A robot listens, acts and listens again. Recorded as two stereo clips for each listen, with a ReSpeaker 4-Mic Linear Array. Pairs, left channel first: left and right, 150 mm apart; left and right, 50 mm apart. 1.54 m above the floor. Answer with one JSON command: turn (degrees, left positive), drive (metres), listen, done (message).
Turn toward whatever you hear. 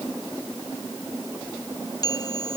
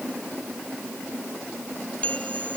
{"turn": 25}
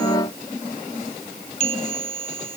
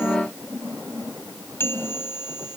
{"turn": 130}
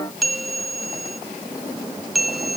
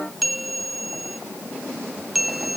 {"done": "Facing the bell."}